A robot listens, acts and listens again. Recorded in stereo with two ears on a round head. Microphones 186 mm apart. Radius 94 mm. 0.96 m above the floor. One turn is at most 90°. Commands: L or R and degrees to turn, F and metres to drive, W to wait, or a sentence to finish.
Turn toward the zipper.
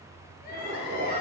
R40
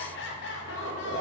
R85
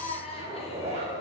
R35
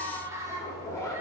L15
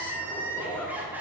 L10
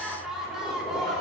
W
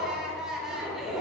Facing the zipper.